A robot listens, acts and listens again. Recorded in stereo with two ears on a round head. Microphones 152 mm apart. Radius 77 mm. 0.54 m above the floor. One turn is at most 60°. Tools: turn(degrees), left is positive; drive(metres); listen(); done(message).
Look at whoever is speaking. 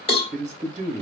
turn(degrees=-45)
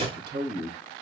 turn(degrees=-60)
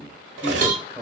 turn(degrees=-25)
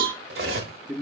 done("Found it: a man speaking, straight ahead.")